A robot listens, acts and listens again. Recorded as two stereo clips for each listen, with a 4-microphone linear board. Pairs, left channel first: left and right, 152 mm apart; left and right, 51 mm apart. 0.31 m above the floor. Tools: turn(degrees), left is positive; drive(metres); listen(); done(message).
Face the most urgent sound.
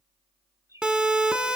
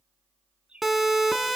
turn(degrees=-30)
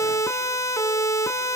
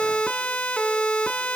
turn(degrees=20)
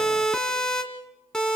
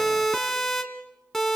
done("Facing the siren.")